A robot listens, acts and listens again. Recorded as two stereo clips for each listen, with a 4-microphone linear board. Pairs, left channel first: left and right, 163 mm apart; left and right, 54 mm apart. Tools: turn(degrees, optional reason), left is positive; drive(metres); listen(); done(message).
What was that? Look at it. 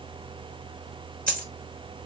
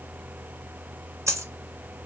turn(degrees=-65, reason="The dropped coin: about 65° right or 115° right.")
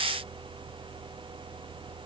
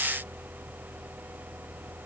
listen()
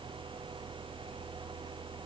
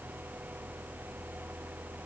done("I heard a dropped coin, but can't make it out now. It was about straight ahead or 50° right.")